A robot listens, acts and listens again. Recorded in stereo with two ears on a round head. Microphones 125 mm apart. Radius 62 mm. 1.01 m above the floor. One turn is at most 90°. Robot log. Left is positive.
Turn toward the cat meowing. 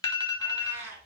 note: The cat meowing: about 20° right or 160° right.
cmd yaw -20
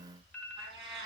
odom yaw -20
note: So it is at 140° right.
cmd yaw -90
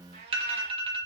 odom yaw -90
note: The cat meowing is now 85° right.
cmd yaw -85
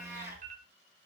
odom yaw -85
note: The cat meowing is now 20° right.
cmd yaw -20
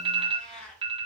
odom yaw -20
end: Facing the cat meowing, over 4 m away.